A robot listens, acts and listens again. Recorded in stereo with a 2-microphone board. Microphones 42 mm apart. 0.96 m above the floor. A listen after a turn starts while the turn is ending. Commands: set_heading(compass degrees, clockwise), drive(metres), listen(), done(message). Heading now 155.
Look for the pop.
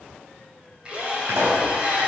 set_heading(245)
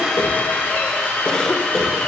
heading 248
done("I heard a pop from this way, but can't make it out now.")